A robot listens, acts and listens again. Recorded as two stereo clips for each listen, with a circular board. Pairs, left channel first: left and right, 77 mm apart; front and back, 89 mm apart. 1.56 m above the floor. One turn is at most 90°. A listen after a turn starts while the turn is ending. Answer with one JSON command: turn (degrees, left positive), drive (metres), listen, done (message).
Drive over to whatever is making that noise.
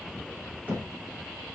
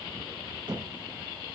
{"turn": -90}
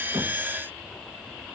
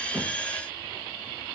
{"turn": -65}
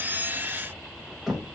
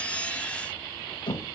{"drive": 1.0}
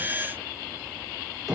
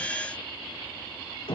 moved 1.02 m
{"drive": 1.0}
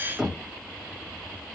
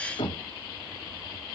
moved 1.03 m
{"drive": 1.0}
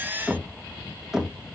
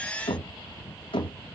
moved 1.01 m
{"drive": 1.0}
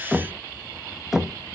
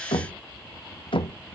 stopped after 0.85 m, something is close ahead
{"done": "Arrived at the knocking, straight ahead."}